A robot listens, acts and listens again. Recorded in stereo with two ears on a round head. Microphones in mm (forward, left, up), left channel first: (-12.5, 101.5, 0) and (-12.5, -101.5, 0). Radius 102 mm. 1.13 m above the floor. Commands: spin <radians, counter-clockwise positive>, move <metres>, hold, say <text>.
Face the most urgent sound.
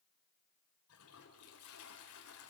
hold
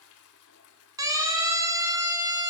spin -0.26
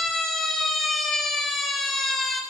say Facing the siren.